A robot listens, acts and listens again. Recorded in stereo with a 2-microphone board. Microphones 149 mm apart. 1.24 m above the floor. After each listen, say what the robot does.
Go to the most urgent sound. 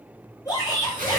Turn 25° left.
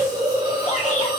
Keep listening.
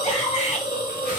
Turn 130° left.
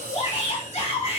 Turn 45° left.
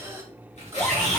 Turn 10° left.
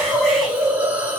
Keep listening.
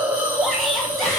Keep listening.
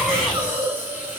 Facing where the shout came from. I can't hear it now. I did not reach it.